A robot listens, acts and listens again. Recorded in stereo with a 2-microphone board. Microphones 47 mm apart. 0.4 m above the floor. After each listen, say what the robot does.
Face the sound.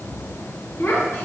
Turn 65° left.
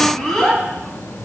Turn 10° left.
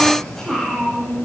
Turn 15° left.
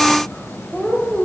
Turn 25° left.
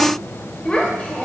Turn 30° left.
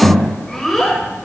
Turn 10° left.
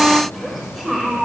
Facing the child speaking.